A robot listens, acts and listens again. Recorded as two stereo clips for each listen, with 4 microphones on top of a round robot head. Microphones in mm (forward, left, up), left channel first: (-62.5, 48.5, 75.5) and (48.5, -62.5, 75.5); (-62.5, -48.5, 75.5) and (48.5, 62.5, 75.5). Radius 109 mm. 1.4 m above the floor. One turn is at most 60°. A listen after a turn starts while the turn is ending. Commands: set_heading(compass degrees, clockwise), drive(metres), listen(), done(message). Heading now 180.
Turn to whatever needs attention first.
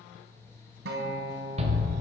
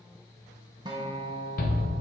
set_heading(240)
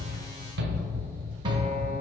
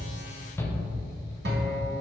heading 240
set_heading(300)
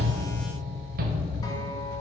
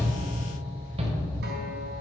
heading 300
set_heading(310)
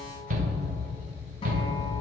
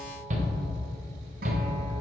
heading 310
done("Found it: a shout, straight ahead, under 1 m away.")